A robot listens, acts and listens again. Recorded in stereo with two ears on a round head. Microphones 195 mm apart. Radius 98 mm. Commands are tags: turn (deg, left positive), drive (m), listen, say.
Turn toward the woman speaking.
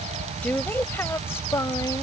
<turn deg="30"/>
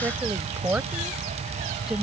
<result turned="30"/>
<say>Facing the woman speaking.</say>